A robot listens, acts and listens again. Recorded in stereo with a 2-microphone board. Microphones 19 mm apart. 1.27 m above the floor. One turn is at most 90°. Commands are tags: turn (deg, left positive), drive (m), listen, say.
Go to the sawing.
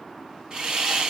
<turn deg="-40"/>
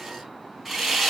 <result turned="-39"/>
<drive m="1.0"/>
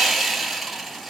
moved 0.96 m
<drive m="1.0"/>
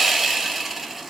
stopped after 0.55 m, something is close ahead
<turn deg="-10"/>
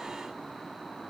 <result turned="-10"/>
<listen/>
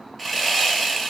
<say>I am next to the sawing.</say>